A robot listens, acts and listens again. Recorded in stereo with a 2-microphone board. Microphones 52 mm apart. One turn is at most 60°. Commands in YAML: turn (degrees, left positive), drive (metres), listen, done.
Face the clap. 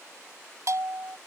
listen: true
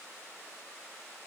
listen: true
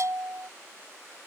done: "I can't make out a clap, only a bell."